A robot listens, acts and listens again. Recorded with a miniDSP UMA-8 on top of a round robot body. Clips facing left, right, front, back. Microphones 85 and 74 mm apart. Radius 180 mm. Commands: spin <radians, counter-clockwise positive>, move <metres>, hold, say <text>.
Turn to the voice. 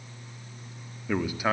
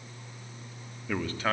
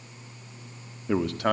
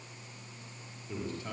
spin 0.17
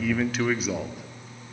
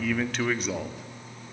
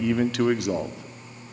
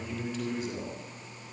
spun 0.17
say Found it: a man speaking, straight ahead.